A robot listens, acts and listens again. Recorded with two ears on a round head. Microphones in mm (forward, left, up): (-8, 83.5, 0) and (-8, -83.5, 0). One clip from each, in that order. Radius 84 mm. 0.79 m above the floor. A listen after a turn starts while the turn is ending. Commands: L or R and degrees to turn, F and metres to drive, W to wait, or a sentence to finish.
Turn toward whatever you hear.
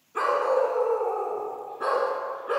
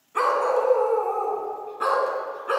R45
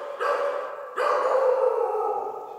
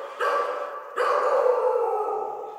R10
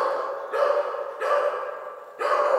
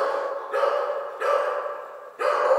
R10
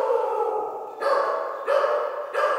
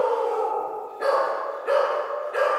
Found it: a dog barking, straight ahead, 2 to 4 m away.